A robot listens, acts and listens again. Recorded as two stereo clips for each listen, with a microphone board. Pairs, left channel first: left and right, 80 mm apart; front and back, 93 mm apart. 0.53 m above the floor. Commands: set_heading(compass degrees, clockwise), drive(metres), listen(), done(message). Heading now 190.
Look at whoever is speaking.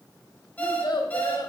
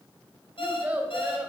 set_heading(85)
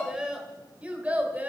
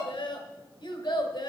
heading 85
set_heading(110)
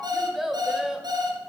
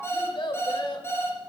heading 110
set_heading(120)
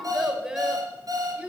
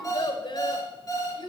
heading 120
set_heading(140)
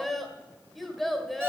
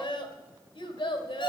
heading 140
done("Found it: a child speaking, straight ahead, 1 to 2 m away.")